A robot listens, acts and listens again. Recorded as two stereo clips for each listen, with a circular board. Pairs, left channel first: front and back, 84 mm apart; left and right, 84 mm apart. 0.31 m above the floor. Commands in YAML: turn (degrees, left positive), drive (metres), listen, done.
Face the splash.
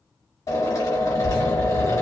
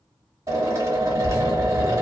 turn: -15
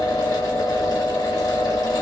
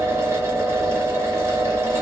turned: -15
done: "Facing where the splash came from. I can't hear it now."